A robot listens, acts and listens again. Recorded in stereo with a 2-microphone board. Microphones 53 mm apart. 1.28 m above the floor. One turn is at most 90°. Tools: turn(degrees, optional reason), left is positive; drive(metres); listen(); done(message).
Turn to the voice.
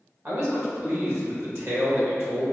turn(degrees=-55, reason="The man speaking: about 55° right or 125° right.")
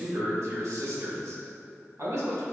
turn(degrees=-70, reason="So it is at 70° right.")
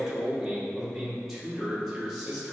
done("Facing the man speaking.")